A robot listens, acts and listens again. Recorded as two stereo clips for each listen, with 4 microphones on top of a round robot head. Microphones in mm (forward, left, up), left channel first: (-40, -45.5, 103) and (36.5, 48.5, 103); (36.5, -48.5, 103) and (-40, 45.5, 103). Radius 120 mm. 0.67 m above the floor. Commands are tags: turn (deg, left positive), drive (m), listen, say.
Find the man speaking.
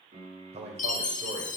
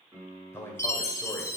<turn deg="20"/>
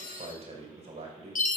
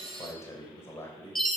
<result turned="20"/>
<turn deg="25"/>
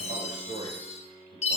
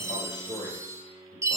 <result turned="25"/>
<turn deg="10"/>
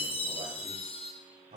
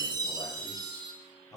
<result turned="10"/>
<turn deg="10"/>
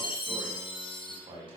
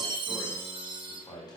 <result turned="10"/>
<say>Found it: a man speaking, straight ahead, over 4 m away.</say>